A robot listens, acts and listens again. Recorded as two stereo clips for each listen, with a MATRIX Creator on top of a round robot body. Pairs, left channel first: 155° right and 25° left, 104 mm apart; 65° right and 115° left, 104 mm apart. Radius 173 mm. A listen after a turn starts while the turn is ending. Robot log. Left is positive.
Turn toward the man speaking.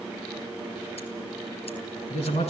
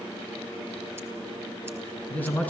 note: The man speaking: 140° right.
cmd yaw -140
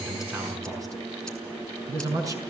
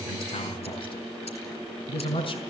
note: The man speaking is now 35° right.
cmd yaw -35
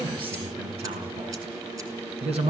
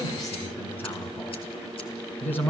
end: Facing the man speaking.